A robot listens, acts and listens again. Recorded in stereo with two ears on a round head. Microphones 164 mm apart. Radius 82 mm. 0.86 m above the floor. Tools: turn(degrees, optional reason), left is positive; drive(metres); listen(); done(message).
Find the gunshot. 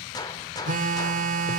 turn(degrees=20, reason="The gunshot: about 20° left or 160° left.")
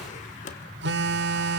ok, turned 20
listen()
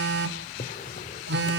done("I heard a gunshot, but can't make it out now. It was about straight ahead or 140° left.")